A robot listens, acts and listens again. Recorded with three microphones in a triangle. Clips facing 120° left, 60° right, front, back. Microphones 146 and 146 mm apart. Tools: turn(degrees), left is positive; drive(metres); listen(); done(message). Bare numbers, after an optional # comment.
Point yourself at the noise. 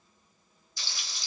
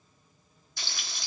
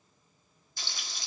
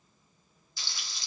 # The frying: 35° right.
turn(-35)
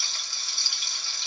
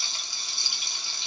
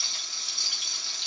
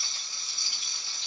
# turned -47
# The frying is now 10° left.
turn(10)
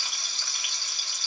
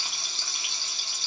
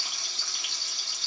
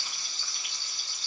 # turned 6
done("Facing the frying, 1 to 2 m away.")